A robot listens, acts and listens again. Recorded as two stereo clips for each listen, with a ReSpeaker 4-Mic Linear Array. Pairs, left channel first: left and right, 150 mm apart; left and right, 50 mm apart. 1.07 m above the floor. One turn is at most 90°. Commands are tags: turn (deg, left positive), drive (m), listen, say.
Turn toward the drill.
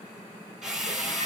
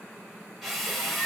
<turn deg="30"/>
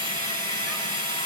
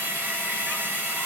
<turn deg="-35"/>
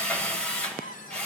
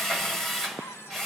<say>Facing the drill.</say>